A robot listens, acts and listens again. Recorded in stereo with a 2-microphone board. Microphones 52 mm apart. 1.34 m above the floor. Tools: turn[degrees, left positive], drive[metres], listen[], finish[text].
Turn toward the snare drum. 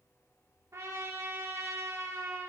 Action: listen[]
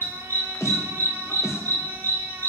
Thought: The snare drum: about 65° left or 115° left.
Action: turn[65]
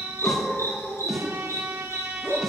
Action: listen[]
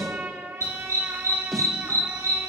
Action: finish[Found it: a snare drum, straight ahead, under 1 m away.]